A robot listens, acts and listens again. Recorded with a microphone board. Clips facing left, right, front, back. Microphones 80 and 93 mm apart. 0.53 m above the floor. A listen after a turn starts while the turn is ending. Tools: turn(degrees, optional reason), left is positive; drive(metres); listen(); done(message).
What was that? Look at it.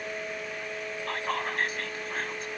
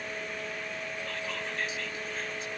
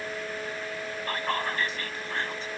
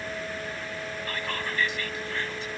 turn(degrees=50, reason="The whispering: 50° left.")
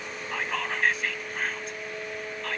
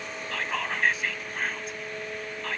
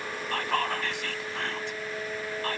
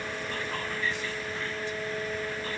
done("Found it: whispering, straight ahead.")